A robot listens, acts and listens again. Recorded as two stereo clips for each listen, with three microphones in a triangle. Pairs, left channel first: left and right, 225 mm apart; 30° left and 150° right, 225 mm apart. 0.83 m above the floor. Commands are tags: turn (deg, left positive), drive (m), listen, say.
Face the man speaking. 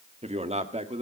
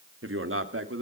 <turn deg="-150"/>
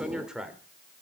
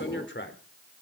<say>Facing the man speaking.</say>